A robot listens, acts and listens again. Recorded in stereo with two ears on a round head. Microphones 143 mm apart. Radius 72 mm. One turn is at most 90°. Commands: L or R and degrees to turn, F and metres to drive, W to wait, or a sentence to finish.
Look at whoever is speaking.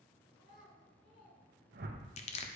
L55
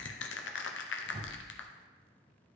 W
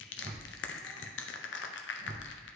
W
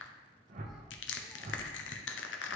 I heard a child speaking, but can't make it out now. It was about straight ahead or 70° left.